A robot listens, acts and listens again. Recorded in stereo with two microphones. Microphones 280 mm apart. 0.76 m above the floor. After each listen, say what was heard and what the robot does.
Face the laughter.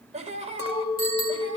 The laughter: about 20° right or 160° right. Turn 20° right.
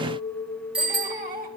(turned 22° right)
The laughter: about 30° right or 150° right. Turn 30° right.
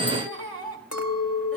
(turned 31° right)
So it is at 125° right. Turn 125° right.
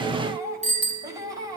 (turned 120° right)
The laughter is now 10° right. Turn 10° right.
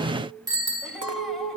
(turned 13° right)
Found it: laughter, straight ahead.